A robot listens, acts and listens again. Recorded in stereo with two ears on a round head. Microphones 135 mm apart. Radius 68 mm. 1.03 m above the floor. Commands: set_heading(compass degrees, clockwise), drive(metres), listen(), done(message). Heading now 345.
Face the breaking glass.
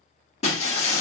set_heading(300)
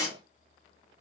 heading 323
set_heading(303)
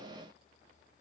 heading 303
done("I heard breaking glass from this way, but can't make it out now.")